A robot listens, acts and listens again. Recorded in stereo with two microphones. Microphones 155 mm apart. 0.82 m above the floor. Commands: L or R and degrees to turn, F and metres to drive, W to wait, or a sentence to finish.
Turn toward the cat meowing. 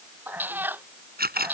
R30
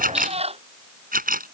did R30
R140
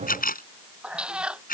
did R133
Facing the cat meowing.